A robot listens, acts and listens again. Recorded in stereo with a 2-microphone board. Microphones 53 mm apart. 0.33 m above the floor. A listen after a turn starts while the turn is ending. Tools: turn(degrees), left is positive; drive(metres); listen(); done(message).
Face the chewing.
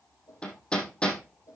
listen()
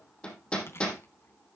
turn(degrees=55)
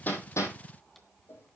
listen()
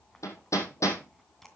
done("Found it: chewing, straight ahead.")